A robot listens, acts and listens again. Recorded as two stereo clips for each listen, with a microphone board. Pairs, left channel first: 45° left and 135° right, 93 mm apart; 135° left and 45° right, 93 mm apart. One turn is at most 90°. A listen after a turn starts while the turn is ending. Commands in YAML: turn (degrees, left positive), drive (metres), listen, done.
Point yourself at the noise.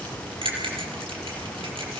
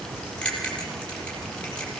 turn: -90
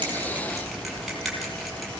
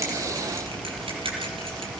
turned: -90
turn: -55
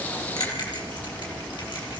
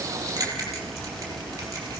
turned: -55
listen: true
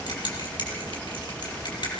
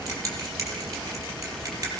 turn: 10
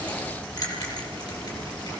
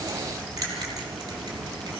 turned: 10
listen: true
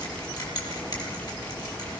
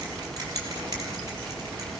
listen: true
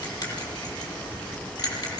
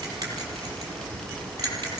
done: "Found it: a bell, straight ahead, over 4 m away."